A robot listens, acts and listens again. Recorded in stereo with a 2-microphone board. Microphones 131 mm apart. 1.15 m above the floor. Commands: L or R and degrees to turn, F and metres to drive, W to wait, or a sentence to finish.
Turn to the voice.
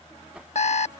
W
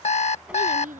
R90
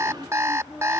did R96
Facing the child speaking.